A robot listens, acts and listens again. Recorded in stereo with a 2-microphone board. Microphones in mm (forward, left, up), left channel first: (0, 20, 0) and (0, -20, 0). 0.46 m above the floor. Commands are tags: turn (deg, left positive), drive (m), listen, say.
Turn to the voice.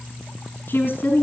<turn deg="50"/>
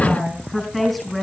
<say>Facing the woman speaking.</say>